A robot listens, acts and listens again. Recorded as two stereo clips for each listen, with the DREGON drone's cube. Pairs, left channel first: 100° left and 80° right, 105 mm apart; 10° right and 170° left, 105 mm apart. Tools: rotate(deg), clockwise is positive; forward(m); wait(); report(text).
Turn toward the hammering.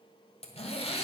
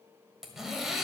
wait()
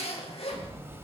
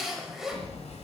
rotate(15)
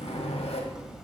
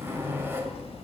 report("Facing the hammering.")